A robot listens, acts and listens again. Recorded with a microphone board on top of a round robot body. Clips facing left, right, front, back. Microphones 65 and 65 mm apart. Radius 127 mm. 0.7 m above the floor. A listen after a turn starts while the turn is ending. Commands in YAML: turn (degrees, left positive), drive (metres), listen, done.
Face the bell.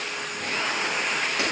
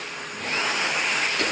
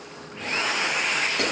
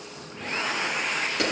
listen: true
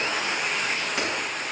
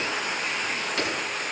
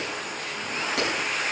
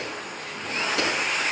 listen: true
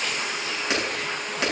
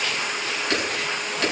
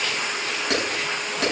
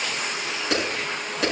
done: "I can't make out a bell to turn to."